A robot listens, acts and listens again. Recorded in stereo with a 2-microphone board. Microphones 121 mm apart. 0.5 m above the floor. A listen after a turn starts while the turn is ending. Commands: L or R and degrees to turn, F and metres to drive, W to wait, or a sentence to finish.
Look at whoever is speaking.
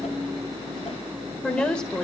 L30
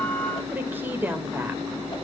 R20
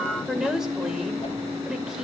Facing the woman speaking.